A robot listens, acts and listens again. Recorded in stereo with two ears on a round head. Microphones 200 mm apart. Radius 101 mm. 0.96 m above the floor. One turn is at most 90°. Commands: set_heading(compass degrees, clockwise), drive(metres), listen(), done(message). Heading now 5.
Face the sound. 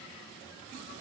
listen()
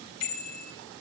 set_heading(275)
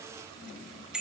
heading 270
done("Facing the bicycle bell.")